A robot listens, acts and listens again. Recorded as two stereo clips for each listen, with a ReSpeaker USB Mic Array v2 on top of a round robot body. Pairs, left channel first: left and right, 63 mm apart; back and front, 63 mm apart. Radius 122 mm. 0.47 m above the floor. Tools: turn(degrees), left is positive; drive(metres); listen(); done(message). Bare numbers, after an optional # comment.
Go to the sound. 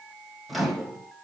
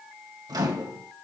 drive(1.0)
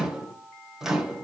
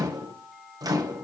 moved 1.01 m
# The microwave is now 10° right.
turn(-10)
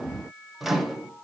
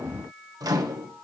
drive(1.0)
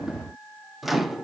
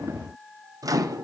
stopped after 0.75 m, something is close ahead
done("Arrived at the microwave, straight ahead.")